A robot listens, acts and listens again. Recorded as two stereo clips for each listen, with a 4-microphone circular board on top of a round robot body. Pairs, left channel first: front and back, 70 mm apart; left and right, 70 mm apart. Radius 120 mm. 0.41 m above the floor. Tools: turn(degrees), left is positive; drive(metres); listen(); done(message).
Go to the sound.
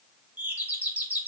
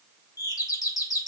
turn(degrees=115)
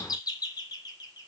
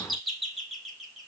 drive(metres=1.0)
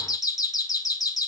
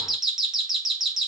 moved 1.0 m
drive(metres=1.0)
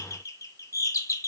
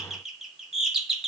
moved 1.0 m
turn(degrees=-10)
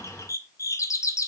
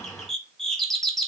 drive(metres=1.0)
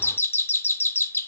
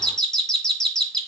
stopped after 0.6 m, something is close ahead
turn(degrees=15)
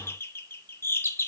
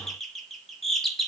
done("Arrived at the doorbell, straight ahead.")